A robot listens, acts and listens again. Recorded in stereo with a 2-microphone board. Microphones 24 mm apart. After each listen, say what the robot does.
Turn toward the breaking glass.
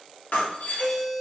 Turn 70° left.
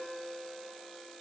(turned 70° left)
Keep listening.
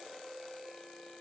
I heard breaking glass, but can't make it out now. It was about straight ahead or 40° left.